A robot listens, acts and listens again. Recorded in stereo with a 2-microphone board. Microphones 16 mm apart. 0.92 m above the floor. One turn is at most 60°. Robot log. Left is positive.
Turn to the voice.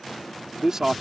note: The man speaking: about 35° right or 145° right.
cmd yaw -35
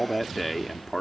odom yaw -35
end: Facing the man speaking.